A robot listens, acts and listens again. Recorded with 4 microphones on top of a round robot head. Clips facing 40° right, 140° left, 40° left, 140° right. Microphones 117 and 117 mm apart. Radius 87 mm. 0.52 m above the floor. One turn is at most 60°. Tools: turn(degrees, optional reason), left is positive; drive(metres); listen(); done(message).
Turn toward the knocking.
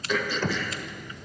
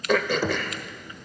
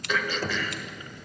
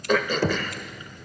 turn(degrees=-60, reason="The knocking: 140° right.")
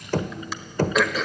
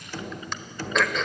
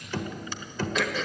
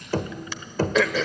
turn(degrees=-60, reason="The knocking is now 85° right.")
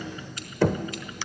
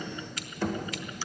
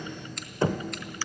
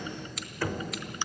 turn(degrees=-25, reason="The knocking is now 25° right.")
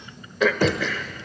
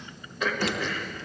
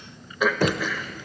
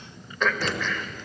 done("Found it: knocking, straight ahead, 1 to 2 m away.")